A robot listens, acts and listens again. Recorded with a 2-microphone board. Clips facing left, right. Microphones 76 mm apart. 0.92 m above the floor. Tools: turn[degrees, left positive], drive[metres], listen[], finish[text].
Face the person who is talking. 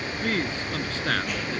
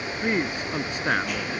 Thought: The man speaking: about 15° right or 165° right.
Action: turn[-15]
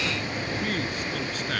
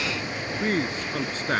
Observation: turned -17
Thought: So it is at 145° right.
Action: turn[-145]
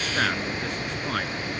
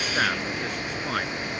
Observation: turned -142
Action: finish[Facing the man speaking.]